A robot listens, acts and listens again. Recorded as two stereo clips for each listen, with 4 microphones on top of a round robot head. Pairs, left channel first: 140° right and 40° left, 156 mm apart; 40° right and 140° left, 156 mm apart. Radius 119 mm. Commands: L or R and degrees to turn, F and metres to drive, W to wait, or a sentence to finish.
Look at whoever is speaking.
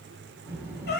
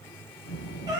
R35
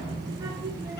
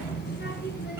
R30
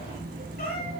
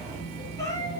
Facing the child speaking.